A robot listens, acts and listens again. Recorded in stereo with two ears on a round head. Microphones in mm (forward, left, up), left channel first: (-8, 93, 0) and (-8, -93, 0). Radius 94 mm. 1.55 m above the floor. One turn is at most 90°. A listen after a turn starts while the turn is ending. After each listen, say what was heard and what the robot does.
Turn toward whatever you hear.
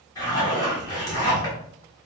The zipper: about 20° left or 160° left. Turn 20° left.
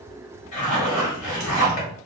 So it is at 145° left. Turn 90° left.
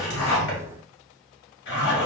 The zipper is now 55° left. Turn 55° left.
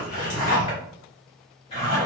The zipper is now 30° left. Turn 30° left.
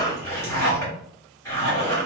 The zipper is now 15° left. Turn 15° left.
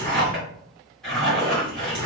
Facing the zipper.